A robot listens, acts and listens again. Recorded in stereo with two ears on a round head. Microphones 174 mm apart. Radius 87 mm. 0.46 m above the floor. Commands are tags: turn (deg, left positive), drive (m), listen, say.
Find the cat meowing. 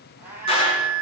<turn deg="-30"/>
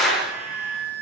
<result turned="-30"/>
<listen/>
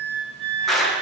<listen/>
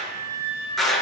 <say>I heard a cat meowing, but can't make it out now. It was about 20° left or 140° right.</say>